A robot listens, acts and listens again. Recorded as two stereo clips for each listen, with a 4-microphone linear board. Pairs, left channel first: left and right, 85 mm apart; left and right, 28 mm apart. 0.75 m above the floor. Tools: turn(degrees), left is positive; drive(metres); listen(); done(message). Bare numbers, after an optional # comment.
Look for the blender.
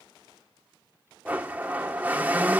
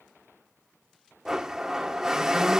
# The blender: about 20° right or 160° right.
turn(-20)
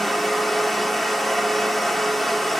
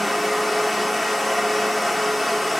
done("Found it: a blender, straight ahead, 1 to 2 m away.")